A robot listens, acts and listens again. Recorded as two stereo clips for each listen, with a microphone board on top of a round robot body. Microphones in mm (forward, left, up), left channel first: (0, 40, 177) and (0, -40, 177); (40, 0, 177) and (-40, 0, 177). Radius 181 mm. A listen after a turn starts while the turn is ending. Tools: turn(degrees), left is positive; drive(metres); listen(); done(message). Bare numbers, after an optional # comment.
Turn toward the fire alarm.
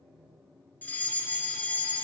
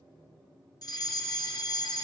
# The fire alarm: 25° left.
turn(25)
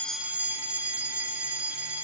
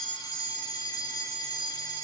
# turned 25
# The fire alarm is now 20° right.
turn(-20)
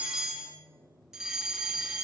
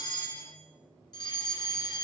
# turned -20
# The fire alarm is now 10° right.
turn(-10)
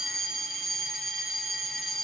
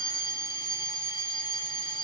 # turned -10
done("Facing the fire alarm.")